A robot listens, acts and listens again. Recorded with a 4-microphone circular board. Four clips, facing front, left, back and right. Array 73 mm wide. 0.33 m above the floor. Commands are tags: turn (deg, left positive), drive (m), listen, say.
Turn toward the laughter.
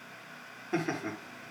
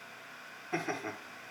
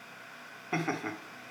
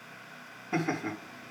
<turn deg="-170"/>
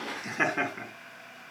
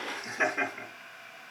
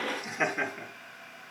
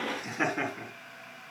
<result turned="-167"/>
<say>Facing the laughter, over 4 m away.</say>